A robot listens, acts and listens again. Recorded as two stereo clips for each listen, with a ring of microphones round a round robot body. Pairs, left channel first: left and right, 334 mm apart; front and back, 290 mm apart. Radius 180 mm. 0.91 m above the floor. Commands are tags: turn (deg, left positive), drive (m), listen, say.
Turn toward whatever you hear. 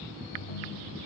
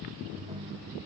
<turn deg="110"/>
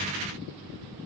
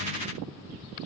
<listen/>
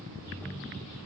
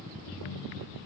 <say>Found it: a ringtone, straight ahead.</say>